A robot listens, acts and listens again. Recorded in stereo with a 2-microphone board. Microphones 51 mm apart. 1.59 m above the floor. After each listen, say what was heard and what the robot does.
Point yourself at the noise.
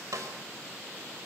Turn 90° right.
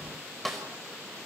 Found it: a snare drum, straight ahead.